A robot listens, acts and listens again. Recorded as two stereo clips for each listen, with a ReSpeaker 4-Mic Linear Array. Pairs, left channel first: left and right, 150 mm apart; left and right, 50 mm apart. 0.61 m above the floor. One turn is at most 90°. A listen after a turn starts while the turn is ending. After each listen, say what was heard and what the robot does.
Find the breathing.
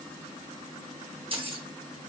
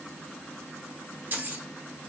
Keep listening.
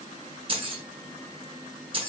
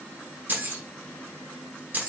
Keep listening.
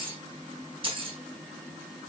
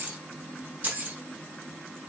I can't make out breathing to turn to.